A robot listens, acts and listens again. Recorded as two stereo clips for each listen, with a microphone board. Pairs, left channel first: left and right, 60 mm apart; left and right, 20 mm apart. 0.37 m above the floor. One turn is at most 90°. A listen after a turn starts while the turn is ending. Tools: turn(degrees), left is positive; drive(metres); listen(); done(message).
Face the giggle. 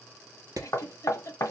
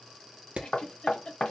turn(degrees=55)
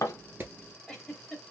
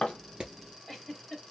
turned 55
done("Facing the giggle, 1 to 2 m away.")